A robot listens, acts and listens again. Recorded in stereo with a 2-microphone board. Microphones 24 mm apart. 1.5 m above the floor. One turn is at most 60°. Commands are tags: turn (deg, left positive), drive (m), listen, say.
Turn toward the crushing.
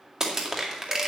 <turn deg="-20"/>
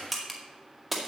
<say>Facing the crushing.</say>